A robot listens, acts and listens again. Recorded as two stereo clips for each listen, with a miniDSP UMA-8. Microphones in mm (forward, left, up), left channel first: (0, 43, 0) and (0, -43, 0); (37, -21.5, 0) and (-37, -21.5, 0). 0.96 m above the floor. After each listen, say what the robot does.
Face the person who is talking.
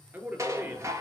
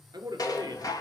Turn 155° right.
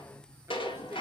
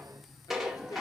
Keep listening.
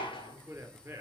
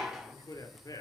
Turn 25° right.
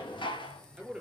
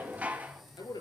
Turn 10° right.
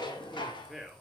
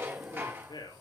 Found it: a man speaking, straight ahead, 2 to 4 m away.